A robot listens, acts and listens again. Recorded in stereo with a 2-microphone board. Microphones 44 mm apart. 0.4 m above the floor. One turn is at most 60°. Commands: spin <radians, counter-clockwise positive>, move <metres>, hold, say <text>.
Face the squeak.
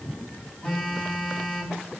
hold
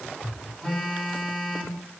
hold
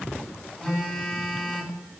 say I can't make out a squeak to turn to.